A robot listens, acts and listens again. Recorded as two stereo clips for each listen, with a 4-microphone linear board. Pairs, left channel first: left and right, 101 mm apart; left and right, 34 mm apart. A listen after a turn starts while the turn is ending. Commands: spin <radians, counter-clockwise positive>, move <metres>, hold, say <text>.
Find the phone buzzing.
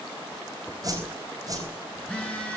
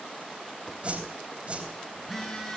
spin 0.52
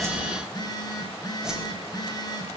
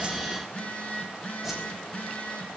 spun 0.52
spin 2.44
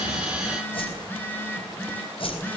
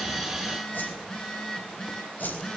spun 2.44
spin 0.35
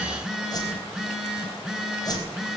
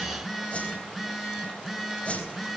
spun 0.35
say Facing the phone buzzing.